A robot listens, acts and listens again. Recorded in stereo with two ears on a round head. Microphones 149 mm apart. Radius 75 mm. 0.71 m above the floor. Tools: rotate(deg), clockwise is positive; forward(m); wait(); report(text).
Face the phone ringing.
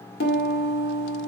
wait()
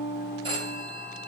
rotate(30)
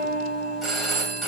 report("Facing the phone ringing.")